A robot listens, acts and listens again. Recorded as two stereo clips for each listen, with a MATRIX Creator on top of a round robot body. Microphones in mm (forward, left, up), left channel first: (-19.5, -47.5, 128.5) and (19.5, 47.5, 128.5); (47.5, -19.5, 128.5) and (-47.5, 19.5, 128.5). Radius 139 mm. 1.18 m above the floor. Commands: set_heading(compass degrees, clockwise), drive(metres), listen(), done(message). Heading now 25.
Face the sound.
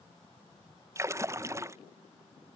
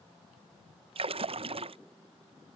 set_heading(255)
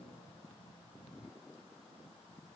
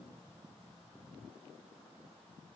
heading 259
done("I heard a splash from this way, but can't make it out now.")